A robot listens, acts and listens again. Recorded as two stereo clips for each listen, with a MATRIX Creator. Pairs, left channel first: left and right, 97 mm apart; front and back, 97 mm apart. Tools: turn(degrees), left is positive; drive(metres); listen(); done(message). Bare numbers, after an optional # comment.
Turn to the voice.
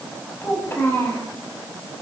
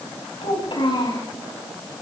# The child speaking: 25° left.
turn(25)
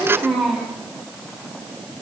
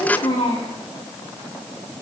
done("Facing the child speaking.")